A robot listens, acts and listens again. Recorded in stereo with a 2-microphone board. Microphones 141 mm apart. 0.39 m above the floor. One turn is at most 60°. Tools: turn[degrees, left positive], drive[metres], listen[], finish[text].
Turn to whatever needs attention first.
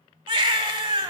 Thought: The baby crying: about 35° right or 145° right.
Action: turn[-35]
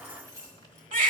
Thought: So it is at 110° right.
Action: turn[-60]
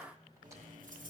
Thought: Nothing new. It was at 50° right.
Action: turn[-50]
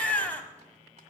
Thought: The baby crying is now 10° left.
Action: turn[10]
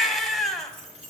Action: finish[Found it: a baby crying, straight ahead, 1 to 2 m away.]